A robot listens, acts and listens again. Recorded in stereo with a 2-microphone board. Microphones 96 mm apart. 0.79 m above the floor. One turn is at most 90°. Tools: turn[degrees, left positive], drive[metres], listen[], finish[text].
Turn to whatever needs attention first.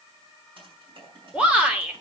Action: turn[-30]
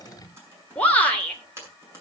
Thought: So it is at 15° left.
Action: turn[15]
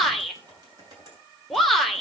Action: finish[Found it: a shout, straight ahead, 2 to 4 m away.]